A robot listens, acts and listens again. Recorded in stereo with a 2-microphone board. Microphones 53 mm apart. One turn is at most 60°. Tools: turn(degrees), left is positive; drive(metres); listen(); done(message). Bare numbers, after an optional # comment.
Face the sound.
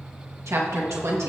# The woman speaking: about 75° right or 105° right.
turn(-60)
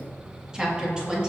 # So it is at 20° right.
turn(-20)
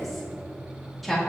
done("Facing the woman speaking, 2 to 4 m away.")